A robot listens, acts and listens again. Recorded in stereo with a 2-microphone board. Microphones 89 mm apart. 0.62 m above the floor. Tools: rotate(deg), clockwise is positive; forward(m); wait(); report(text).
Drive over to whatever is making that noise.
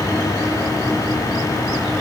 wait()
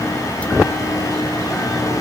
wait()
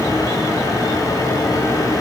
report("I can't make out anything to turn to.")